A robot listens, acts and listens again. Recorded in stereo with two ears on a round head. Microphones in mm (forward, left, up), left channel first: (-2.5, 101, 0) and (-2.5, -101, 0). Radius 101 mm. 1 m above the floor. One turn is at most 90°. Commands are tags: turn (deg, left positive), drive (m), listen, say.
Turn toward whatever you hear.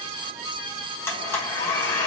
<turn deg="30"/>
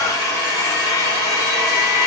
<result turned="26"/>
<turn deg="-15"/>
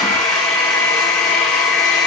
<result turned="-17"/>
<say>Facing the blender.</say>